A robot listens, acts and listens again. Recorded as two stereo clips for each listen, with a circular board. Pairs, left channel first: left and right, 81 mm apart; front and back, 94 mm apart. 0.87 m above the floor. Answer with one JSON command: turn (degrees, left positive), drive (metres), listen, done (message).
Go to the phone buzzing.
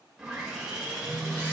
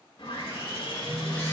{"turn": 160}
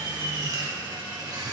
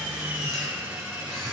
{"turn": 50}
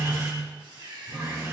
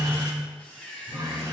{"turn": 25}
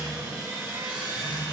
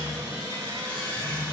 {"turn": 20}
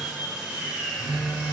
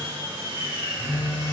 {"drive": 1.0}
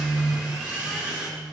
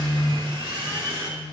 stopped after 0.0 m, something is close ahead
{"done": "Something is in my way. I am facing the phone buzzing but have not reached it."}